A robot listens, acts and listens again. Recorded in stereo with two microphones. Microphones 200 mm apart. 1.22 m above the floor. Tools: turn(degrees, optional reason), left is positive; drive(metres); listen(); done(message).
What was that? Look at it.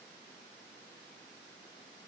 listen()
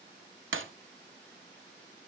turn(degrees=-90)
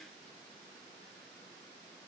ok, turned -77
turn(degrees=-15, reason="Nothing new. It was at 15° right.")
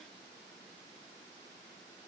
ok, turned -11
done("I heard breaking glass from this way, but can't make it out now.")